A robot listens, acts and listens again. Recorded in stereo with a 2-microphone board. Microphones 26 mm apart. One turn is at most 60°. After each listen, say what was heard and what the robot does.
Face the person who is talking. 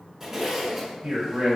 The man speaking: about 50° right or 130° right. Turn 50° right.
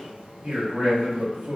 So it is at 75° right. Turn 60° right.
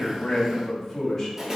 The man speaking is now 15° left. Turn 15° left.
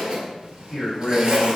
Found it: a man speaking, straight ahead, 2 to 4 m away.